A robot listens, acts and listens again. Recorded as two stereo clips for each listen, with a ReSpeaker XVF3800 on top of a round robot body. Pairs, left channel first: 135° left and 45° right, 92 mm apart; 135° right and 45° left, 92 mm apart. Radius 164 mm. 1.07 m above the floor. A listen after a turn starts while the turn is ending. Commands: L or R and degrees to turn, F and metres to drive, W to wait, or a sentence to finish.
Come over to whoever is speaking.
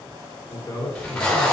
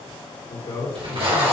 R155
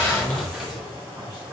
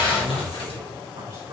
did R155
W
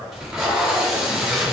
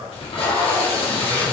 L20
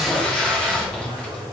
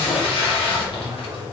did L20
F1.0
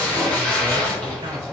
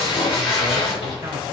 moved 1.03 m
W
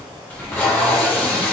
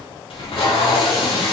W
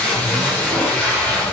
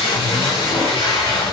Facing where the man speaking came from. I can't hear it now. I did not reach it.